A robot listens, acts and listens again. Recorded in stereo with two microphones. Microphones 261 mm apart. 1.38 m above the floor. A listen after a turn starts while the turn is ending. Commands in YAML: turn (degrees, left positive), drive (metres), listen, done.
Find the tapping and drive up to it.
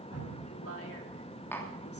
turn: 30
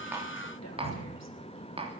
turn: -20
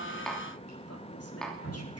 drive: 1.0
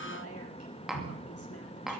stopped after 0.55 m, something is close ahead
done: "Blocked. The tapping is further on, straight ahead."